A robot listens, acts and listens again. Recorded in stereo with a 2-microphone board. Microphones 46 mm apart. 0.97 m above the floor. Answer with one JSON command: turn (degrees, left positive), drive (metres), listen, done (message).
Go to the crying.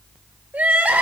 {"turn": -35}
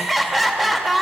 {"drive": 1.0}
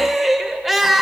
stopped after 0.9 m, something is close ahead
{"done": "Arrived at the crying, straight ahead."}